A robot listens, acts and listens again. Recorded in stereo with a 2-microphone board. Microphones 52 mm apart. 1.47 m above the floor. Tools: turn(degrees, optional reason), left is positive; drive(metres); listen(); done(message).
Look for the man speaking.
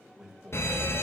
turn(degrees=-30)
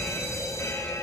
listen()
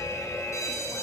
listen()
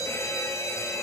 done("I heard a man speaking, but can't make it out now. It was about 15° left or 135° right.")